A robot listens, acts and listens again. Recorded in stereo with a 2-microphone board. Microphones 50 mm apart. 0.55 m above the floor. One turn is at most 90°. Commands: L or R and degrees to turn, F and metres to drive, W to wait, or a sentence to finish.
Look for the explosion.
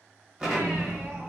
R15
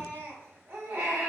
W
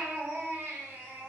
I heard an explosion, but can't make it out now. It was about straight ahead or 150° right.